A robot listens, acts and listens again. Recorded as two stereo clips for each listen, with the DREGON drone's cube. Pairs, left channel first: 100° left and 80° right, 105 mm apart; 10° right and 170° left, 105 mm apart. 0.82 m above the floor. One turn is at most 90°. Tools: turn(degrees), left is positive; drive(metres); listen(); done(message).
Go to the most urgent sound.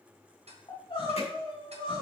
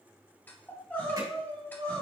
turn(degrees=60)
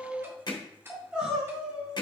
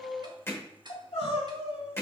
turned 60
drive(metres=1.0)
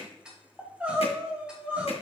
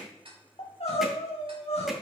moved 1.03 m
drive(metres=1.0)
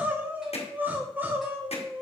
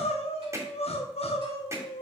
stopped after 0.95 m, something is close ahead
done("Arrived at the crying, straight ahead.")